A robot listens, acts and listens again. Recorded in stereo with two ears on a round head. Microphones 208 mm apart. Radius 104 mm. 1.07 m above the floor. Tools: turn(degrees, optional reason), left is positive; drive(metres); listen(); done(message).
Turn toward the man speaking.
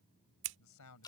turn(degrees=90)
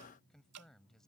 done("Facing the man speaking.")